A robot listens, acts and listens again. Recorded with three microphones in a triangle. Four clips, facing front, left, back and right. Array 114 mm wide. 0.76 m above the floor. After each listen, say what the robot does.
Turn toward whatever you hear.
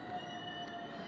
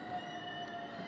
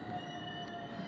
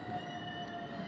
Keep listening.
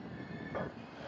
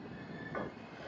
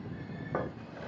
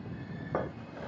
Turn 115° right.
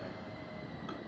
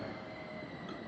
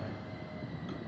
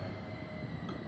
Keep listening.
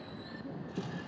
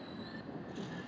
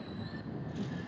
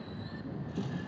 Turn 30° right.
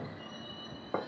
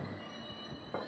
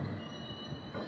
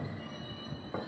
Found it: a drawer, straight ahead.